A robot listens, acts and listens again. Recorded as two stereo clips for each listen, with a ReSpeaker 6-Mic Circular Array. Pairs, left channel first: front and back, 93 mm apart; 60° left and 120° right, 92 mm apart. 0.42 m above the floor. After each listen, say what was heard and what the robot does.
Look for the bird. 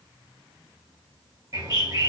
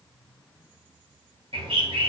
The bird: 130° right. Turn 130° right.
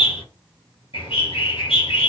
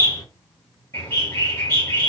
Found it: a bird, straight ahead, 2 to 4 m away.